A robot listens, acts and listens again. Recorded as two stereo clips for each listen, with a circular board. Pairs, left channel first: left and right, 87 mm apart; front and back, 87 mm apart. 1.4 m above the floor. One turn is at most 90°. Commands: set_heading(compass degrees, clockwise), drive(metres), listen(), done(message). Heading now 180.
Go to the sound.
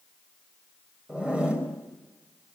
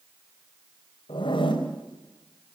set_heading(190)
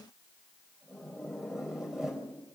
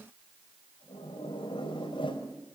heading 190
drive(1.0)
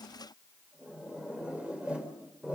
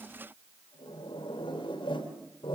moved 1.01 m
set_heading(200)
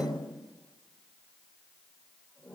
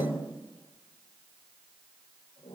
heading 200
drive(1.0)
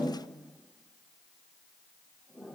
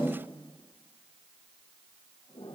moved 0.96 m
drive(1.0)
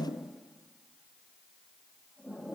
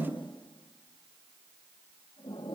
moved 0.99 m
listen()
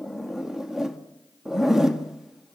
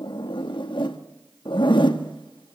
drive(1.0)
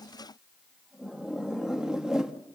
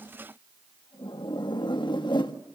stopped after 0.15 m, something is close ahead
set_heading(210)
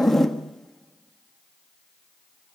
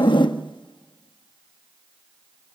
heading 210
done("Arrived at the zipper, straight ahead.")